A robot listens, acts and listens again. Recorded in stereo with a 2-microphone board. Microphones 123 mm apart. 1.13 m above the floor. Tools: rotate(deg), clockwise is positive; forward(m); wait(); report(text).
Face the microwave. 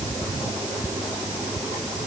wait()
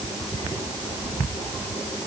wait()
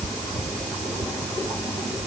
report("I can't make out a microwave.")